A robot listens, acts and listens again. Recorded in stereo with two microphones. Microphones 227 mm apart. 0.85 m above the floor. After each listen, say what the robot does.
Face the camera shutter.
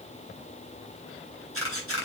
Turn 70° left.
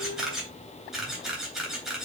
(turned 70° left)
Facing the camera shutter.